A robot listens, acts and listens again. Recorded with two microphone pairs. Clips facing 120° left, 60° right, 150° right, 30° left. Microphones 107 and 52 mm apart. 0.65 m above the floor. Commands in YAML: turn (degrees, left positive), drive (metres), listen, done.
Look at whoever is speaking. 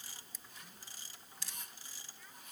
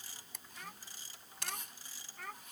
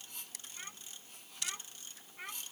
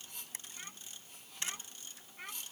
turn: -70
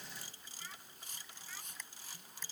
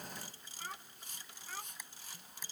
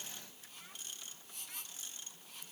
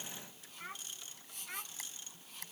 turn: -20
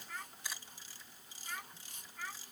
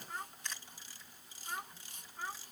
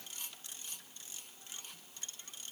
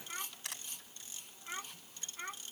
done: "Facing the child speaking."